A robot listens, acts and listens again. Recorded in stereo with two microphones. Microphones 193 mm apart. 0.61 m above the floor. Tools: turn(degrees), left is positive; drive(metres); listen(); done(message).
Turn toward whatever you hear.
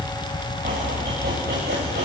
turn(degrees=-55)
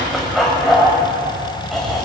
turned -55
done("Found it: chopping, straight ahead.")